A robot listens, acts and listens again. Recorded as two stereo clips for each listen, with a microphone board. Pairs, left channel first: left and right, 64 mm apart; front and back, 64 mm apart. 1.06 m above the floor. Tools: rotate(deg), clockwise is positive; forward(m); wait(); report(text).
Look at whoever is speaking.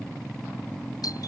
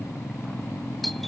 wait()
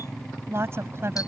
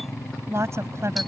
rotate(135)
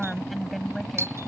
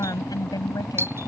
report("Found it: a woman speaking, straight ahead.")